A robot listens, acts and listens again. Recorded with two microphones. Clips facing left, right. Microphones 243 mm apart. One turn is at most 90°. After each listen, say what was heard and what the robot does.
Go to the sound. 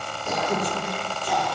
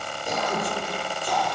Turn 30° left.
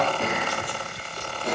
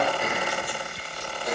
So it is at 150° left. Turn 90° left.
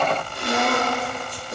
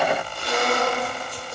The throat clearing is now 75° left. Turn 75° left.
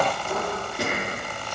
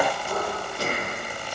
The throat clearing is now 20° left. Turn 20° left.
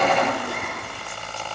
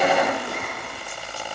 Keep listening.
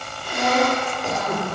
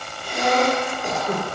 Drive 1.0 m forward.
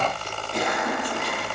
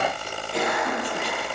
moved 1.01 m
Drive 1.0 m forward.
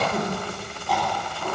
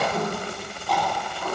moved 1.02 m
Drive 1.0 m forward.
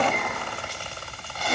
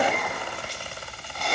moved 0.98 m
Drive 1.0 m forward.
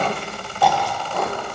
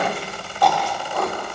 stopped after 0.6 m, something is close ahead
I am next to the throat clearing.